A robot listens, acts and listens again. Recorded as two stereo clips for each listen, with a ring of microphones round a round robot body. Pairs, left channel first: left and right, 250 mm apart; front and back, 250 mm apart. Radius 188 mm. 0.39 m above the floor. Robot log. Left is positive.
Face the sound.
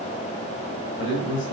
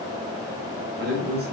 note: The man speaking: 130° left.
cmd yaw +130
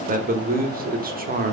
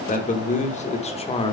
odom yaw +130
note: The man speaking is now 60° right.
cmd yaw -60
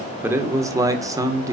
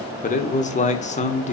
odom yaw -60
note: The man speaking is now 25° right.
cmd yaw -25
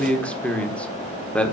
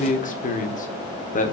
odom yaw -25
note: The man speaking is now 10° left.
cmd yaw +10
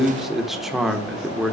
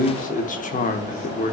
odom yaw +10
end: Found it: a man speaking, straight ahead.